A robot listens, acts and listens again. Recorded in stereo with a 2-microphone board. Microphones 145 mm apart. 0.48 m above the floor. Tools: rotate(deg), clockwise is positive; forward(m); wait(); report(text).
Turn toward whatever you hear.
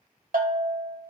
rotate(90)
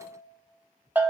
rotate(15)
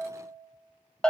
report("Facing the bell.")